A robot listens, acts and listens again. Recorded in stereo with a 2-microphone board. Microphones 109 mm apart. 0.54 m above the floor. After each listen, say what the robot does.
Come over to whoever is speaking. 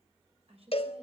Turn 65° right.
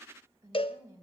Turn 35° right.
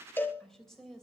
Drive 1.0 m forward.
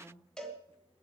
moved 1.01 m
Drive 1.0 m forward.
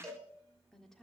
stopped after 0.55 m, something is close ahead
I am next to the woman speaking.